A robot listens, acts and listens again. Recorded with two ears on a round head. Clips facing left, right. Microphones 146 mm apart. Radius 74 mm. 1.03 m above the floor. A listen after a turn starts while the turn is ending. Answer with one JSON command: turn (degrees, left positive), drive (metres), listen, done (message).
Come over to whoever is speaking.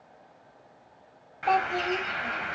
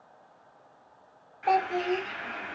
{"turn": -30}
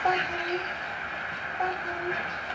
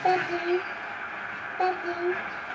{"turn": -140}
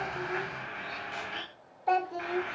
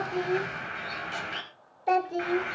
{"turn": -30}
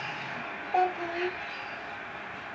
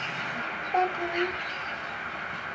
{"turn": -10}
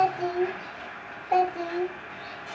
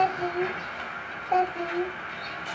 {"drive": 1.0}
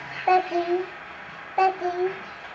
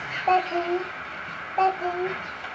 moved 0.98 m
{"turn": 10}
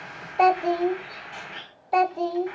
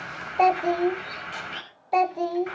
{"drive": 1.0}
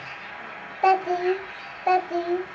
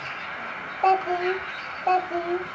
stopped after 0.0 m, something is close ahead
{"done": "I am next to the child speaking."}